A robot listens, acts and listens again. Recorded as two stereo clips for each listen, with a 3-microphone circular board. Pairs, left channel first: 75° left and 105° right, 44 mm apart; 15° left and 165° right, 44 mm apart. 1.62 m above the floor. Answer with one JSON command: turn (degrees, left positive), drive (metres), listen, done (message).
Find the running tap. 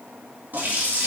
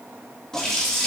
{"turn": -60}
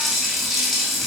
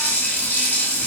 {"turn": -15}
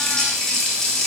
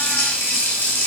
{"done": "Facing the running tap, 1 to 2 m away."}